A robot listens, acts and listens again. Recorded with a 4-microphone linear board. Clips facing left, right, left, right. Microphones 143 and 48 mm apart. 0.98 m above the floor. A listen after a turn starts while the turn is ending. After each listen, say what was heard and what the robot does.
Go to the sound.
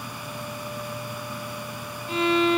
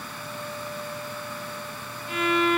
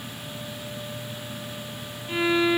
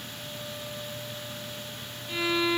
The violin: about 25° left or 155° left. Turn 25° left.
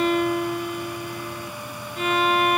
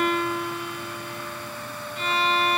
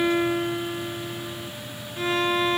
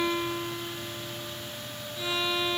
So it is at 125° left. Turn 125° left.
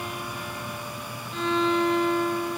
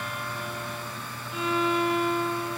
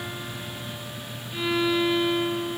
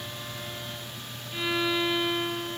Drive 1.0 m forward.
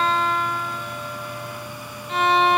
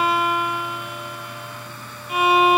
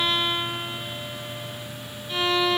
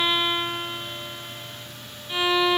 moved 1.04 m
The violin is now 10° right. Turn 10° right.
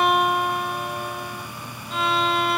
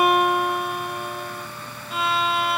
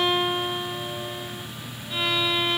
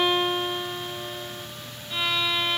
Drive 1.0 m forward.
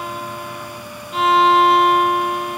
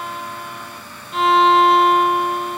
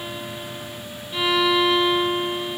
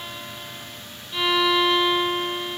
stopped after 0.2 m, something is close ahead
Arrived at the violin, straight ahead.